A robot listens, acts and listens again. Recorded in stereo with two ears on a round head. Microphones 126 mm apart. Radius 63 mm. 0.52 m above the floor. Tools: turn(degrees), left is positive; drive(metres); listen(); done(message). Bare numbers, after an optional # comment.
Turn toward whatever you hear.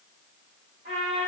# The trumpet: about 50° right or 130° right.
turn(-50)
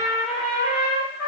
done("Facing the trumpet, 1 to 2 m away.")